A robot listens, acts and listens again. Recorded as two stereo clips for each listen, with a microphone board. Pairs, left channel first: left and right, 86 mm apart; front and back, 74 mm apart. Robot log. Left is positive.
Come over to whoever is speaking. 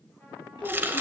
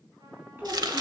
note: The child speaking: 120° left.
cmd yaw +120
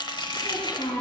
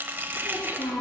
note: The child speaking is now 35° left.
cmd yaw +35
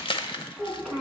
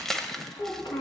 cmd fwd 1.0
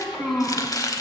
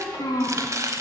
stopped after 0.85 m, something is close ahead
end: Blocked. The child speaking is further on, straight ahead.